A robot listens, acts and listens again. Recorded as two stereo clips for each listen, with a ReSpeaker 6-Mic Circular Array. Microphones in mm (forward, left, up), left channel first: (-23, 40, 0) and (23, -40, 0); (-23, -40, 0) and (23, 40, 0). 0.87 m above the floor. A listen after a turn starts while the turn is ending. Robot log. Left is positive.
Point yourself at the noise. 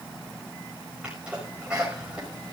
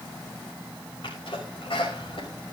note: The sneeze: 140° right.
cmd yaw -140
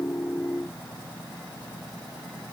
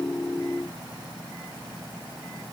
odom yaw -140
end: I heard a sneeze from this way, but can't make it out now.